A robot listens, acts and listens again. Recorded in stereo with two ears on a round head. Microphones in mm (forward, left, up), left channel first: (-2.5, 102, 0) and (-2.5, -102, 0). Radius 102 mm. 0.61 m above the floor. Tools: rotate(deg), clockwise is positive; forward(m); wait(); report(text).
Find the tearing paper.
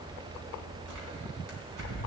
rotate(70)
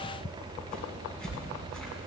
report("Facing the tearing paper.")